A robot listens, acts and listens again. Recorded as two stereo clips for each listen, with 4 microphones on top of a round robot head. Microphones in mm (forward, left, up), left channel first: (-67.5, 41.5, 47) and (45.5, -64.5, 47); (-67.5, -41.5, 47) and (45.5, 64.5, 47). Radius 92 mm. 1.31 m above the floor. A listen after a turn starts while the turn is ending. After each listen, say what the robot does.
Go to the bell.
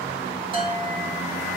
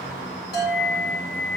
Turn 100° right.
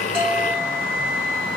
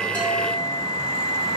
Keep listening.
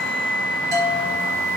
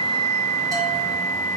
Keep listening.
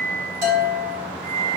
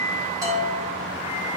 Turn 25° right.
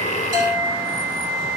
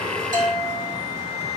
Drive 1.0 m forward.
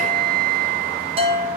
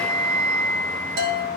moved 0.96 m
Turn 15° left.
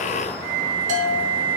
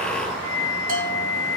Drive 1.0 m forward.
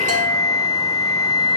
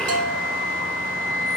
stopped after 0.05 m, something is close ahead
Keep listening.
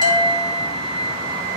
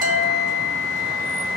Keep listening.
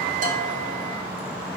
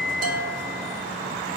Facing where the bell came from. I can't hear it now. I did not reach it.